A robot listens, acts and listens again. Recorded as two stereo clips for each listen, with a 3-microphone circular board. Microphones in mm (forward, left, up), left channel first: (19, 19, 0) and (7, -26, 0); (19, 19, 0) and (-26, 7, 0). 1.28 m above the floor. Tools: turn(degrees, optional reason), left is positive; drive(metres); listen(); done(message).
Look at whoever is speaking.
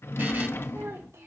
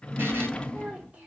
turn(degrees=-105, reason="The child speaking: 105° right.")
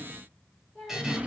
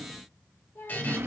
done("Facing the child speaking.")